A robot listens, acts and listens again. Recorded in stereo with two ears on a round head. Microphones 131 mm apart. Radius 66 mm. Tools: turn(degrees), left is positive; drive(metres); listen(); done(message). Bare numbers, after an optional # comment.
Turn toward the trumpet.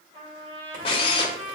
# The trumpet: about 40° right or 140° right.
turn(-40)
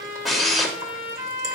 # So it is at 100° right.
turn(-100)
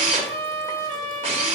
# The trumpet is now 40° right.
turn(-40)
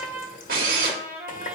# The trumpet is now 10° right.
turn(-10)
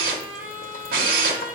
done("Found it: a trumpet, straight ahead.")